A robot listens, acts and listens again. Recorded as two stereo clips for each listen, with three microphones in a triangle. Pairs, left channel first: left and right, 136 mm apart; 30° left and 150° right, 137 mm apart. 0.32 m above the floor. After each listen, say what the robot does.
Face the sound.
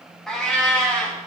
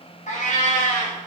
Turn 10° left.
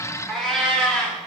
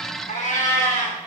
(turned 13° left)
Turn 10° left.
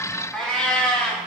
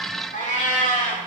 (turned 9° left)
Turn 10° left.
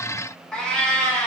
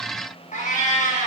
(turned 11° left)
Turn 10° left.
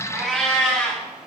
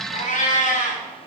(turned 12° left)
Facing the cat meowing, over 4 m away.